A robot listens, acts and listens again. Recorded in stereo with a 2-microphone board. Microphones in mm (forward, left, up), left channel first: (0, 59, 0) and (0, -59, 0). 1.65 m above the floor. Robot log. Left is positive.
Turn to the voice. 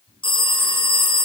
cmd idle
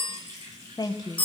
note: The woman speaking: about 35° left or 145° left.
cmd yaw +35
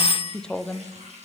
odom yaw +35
end: Facing the woman speaking, under 1 m away.